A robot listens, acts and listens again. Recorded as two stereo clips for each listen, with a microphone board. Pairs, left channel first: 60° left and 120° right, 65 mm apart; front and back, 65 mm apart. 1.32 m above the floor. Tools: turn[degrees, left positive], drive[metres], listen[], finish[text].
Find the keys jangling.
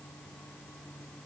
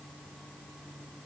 Action: listen[]
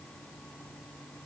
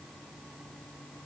Action: listen[]
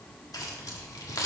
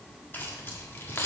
Thought: The keys jangling: 50° left.
Action: turn[50]
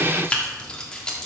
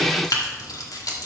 Thought: The keys jangling is now 20° right.
Action: turn[-20]
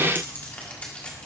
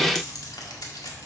Thought: The keys jangling is now 10° right.
Action: turn[-10]
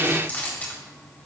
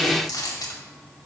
Action: finish[Found it: keys jangling, straight ahead, 1 to 2 m away.]